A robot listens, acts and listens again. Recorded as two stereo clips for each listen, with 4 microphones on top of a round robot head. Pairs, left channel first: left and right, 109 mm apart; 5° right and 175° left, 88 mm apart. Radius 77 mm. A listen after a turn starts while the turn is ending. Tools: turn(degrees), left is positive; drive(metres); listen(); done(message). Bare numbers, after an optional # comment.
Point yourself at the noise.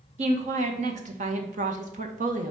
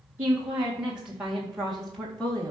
# The woman speaking: 85° right.
turn(-85)
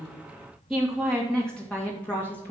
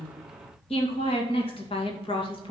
# The woman speaking is now 15° left.
turn(15)
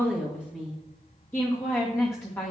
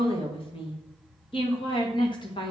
# The woman speaking is now 20° left.
turn(20)
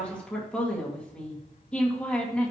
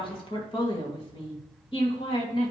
done("Found it: a woman speaking, straight ahead.")